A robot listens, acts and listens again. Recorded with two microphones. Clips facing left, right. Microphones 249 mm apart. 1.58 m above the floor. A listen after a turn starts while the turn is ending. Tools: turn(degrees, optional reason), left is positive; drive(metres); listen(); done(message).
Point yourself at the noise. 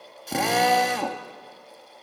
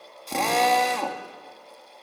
turn(degrees=30)
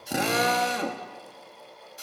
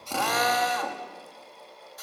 turn(degrees=145, reason="So it is at 145° left.")
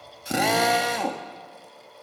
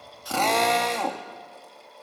done("Found it: a drill, straight ahead.")